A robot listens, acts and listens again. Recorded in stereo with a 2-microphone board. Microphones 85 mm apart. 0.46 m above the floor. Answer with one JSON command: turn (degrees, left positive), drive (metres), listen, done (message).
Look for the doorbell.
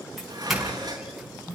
{"turn": -30}
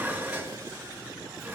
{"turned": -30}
{"listen": true}
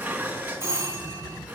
{"turn": -145}
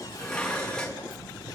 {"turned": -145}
{"listen": true}
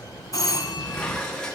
{"turn": 45}
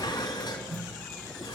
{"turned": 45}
{"done": "Facing the doorbell."}